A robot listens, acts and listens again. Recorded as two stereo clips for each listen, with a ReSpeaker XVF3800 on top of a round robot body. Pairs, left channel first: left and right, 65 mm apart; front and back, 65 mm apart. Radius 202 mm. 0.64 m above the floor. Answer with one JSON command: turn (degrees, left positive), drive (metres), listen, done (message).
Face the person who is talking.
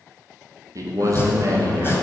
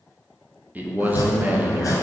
{"turn": -120}
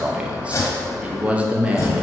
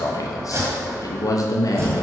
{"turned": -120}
{"turn": -20}
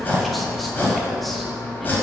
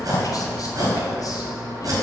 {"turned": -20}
{"listen": true}
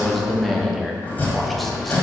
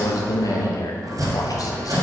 {"done": "Facing the man speaking, 1 to 2 m away."}